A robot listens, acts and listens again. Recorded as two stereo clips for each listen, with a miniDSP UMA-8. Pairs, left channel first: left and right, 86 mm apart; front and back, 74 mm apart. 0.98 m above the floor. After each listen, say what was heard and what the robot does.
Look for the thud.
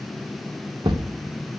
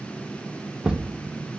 The thud: 100° right. Turn 100° right.
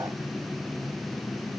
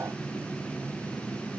Facing where the thud came from. I can't hear it now.